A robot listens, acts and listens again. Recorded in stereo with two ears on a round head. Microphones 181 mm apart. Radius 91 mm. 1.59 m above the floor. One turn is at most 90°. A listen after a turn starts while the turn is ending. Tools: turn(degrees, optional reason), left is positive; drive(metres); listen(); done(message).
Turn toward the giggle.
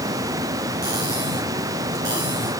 listen()
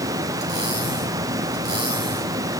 listen()
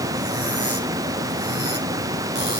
done("I can't make out a giggle to turn to.")